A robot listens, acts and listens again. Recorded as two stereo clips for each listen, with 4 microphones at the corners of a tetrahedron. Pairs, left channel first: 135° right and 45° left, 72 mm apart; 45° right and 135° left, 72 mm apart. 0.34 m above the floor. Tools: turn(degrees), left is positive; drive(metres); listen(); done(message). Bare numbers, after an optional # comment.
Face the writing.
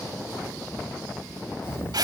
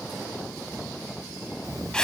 # The writing: 170° left.
turn(170)
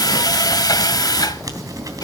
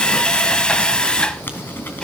# The writing is now 15° left.
turn(15)
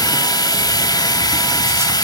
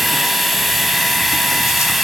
listen()
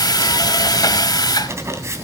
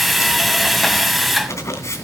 done("Found it: writing, straight ahead, 2 to 4 m away.")